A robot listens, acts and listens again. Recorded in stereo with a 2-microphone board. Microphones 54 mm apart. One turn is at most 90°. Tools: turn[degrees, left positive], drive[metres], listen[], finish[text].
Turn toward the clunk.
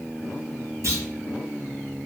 Thought: The clunk: about 70° right or 110° right.
Action: turn[-70]
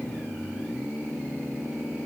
Action: listen[]
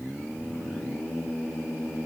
Action: finish[I heard a clunk, but can't make it out now. It was about straight ahead or 40° right.]